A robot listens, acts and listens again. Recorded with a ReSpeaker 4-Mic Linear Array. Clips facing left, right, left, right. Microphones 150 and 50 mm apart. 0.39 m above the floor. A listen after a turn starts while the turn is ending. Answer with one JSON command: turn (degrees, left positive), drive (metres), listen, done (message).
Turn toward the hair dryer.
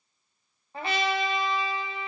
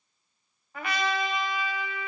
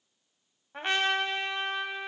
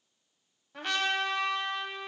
{"listen": true}
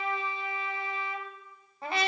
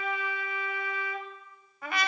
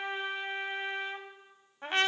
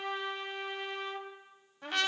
{"listen": true}
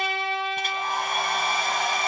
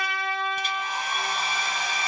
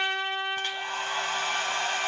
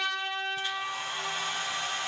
{"turn": 55}
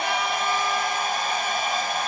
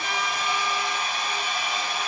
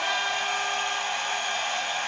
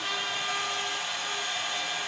{"turn": 55}
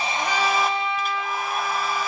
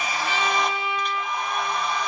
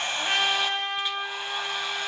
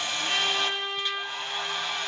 {"done": "Found it: a hair dryer, straight ahead, 1 to 2 m away."}